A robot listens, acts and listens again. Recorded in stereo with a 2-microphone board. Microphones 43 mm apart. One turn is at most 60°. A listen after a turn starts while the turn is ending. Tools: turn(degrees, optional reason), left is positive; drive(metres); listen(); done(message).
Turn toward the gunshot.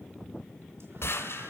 turn(degrees=60, reason="The gunshot: about 70° left or 110° left.")
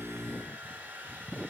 listen()
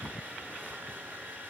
done("I heard a gunshot, but can't make it out now. It was about 10° left or 50° left.")